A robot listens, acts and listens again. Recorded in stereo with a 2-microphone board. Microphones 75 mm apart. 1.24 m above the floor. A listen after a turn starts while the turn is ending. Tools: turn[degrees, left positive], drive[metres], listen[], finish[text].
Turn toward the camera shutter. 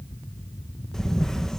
Action: turn[30]
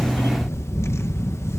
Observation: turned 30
Thought: So it is at 145° left.
Action: turn[145]
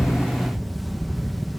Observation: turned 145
Action: finish[Found it: a camera shutter, straight ahead.]